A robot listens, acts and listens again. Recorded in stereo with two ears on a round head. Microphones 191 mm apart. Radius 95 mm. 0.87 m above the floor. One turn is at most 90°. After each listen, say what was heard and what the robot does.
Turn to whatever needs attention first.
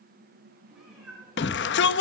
The shout: about 55° left or 125° left. Turn 55° left.
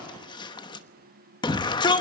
So it is at 25° left. Turn 25° left.
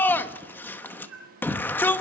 The shout is now 10° left. Turn 10° left.
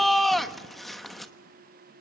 Found it: a shout, straight ahead, 1 to 2 m away.